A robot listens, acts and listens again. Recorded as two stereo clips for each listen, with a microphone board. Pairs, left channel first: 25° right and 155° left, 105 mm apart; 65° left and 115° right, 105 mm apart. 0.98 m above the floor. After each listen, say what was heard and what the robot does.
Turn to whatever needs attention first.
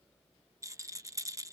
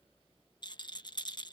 Keep listening.
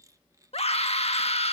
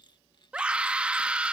The scream: 35° right. Turn 35° right.
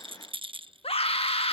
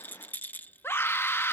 Facing the scream.